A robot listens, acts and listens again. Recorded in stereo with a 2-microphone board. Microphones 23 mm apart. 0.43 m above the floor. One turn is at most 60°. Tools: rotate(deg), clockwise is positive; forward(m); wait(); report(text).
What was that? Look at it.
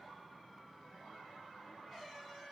wait()
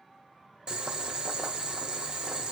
rotate(40)
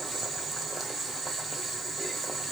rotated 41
report("Facing the boiling, 1 to 2 m away.")